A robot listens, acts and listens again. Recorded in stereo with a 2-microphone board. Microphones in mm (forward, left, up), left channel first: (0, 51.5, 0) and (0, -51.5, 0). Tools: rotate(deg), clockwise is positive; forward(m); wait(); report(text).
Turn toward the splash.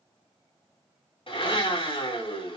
wait()
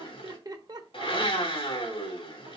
wait()
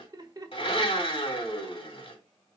report("I can't make out a splash to turn to.")